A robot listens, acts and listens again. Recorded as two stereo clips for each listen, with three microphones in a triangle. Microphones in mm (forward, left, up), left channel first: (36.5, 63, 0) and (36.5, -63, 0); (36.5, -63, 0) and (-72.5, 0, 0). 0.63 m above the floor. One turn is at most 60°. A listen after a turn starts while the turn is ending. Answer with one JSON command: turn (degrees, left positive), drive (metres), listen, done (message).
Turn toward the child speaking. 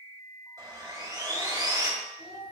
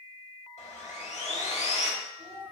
{"turn": 60}
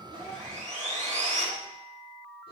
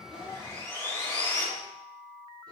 {"turn": 60}
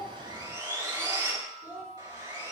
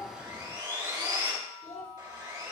{"turn": -20}
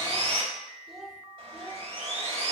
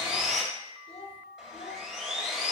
{"done": "Found it: a child speaking, straight ahead, 1 to 2 m away."}